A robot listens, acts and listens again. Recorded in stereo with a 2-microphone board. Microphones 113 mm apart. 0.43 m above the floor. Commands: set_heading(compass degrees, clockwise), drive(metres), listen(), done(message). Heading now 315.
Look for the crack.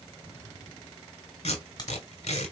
set_heading(285)
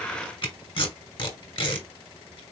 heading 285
listen()
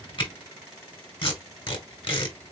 done("I heard a crack, but can't make it out now. It was about straight ahead or 120° left.")